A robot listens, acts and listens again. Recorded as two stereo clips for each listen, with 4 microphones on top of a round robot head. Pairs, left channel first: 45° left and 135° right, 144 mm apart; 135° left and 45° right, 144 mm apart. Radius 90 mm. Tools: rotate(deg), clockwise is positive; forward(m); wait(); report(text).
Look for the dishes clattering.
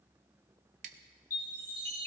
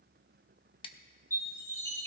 wait()
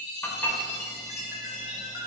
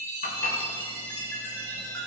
rotate(-120)
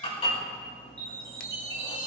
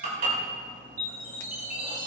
rotate(10)
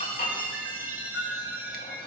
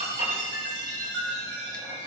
report("Found it: dishes clattering, straight ahead.")